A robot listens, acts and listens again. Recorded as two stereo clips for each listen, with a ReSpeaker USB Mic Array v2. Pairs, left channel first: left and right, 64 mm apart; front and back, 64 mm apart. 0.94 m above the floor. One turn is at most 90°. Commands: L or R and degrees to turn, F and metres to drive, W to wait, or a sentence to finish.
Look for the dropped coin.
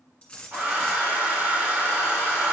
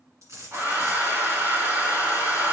L90
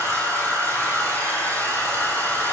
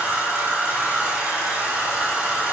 L70
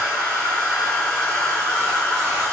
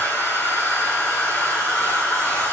I heard a dropped coin from this way, but can't make it out now.